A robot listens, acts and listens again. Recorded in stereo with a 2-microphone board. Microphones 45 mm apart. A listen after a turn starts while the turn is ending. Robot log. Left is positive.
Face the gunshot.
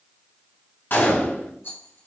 note: The gunshot: about 55° left or 125° left.
cmd yaw +55
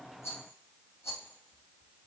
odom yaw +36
cmd idle
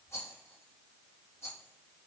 end: I heard a gunshot, but can't make it out now. It was about 20° left or 90° left.